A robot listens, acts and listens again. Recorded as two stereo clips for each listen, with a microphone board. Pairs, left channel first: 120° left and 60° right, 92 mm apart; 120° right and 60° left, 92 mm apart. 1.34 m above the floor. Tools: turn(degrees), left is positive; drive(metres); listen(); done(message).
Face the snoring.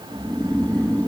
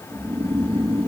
turn(degrees=45)
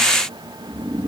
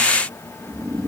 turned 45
turn(degrees=15)
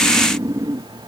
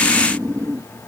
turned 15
done("Facing the snoring.")